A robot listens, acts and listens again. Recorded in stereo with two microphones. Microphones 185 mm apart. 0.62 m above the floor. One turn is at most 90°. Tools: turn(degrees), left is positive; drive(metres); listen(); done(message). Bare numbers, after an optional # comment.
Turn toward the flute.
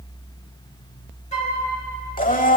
# The flute: about 40° left or 140° left.
turn(40)
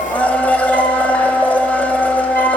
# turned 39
listen()
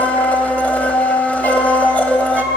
# So it is at 95° left.
turn(90)
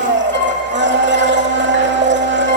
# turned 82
# Nothing new. It was at 15° left.
turn(15)
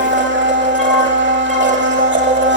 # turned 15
listen()
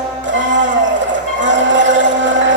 done("Facing where the flute came from. I can't hear it now.")